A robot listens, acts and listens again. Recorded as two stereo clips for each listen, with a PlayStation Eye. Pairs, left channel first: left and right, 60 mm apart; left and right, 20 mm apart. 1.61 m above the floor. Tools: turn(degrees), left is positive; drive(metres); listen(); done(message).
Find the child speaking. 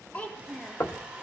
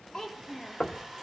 turn(degrees=20)
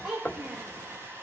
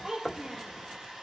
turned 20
turn(degrees=-10)
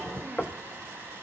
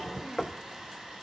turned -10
listen()
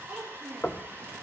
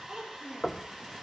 turn(degrees=-15)
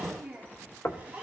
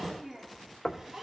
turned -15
turn(degrees=-10)
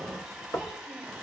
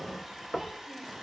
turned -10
listen()
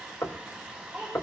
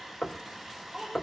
done("Facing the child speaking, over 4 m away.")